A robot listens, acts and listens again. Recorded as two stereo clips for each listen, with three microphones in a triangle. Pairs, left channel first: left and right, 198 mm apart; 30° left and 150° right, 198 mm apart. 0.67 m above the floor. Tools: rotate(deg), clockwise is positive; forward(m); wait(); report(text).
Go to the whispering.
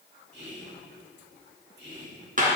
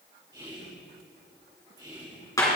rotate(80)
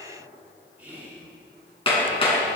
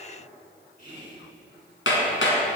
rotate(10)
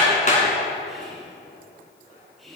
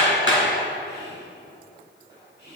forward(1.0)
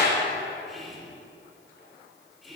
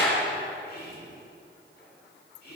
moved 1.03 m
forward(1.0)
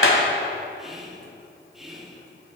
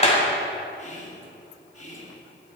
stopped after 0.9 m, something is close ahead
report("I am next to the whispering.")